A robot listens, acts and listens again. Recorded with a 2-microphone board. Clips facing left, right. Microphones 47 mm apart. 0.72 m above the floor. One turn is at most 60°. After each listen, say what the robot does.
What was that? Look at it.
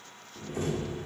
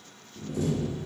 Turn 40° left.
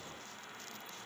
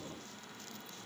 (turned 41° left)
Keep listening.
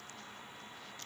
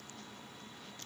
I heard a door slam, but can't make it out now. It was about straight ahead or 100° left.